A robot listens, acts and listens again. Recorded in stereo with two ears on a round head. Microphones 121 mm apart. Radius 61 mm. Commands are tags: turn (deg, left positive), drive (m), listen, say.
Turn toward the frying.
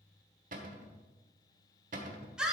<listen/>
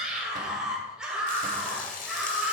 <turn deg="65"/>
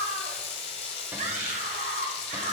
<turn deg="50"/>
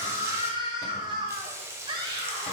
<turn deg="-20"/>
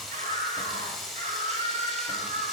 <say>Found it: frying, straight ahead.</say>